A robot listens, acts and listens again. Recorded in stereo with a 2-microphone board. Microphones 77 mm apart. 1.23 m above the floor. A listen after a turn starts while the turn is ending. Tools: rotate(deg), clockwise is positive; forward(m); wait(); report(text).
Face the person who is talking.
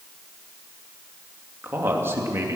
rotate(35)
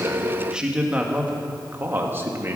rotate(35)
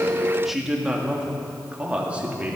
rotate(20)
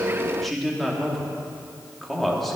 report("Facing the man speaking.")